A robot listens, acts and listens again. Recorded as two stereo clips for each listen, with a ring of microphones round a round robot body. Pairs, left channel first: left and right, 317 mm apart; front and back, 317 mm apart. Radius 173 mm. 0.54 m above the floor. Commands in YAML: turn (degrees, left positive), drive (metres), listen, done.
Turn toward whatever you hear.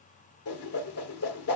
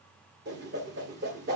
turn: 125
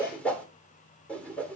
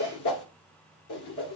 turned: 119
done: "Found it: a whoosh, straight ahead."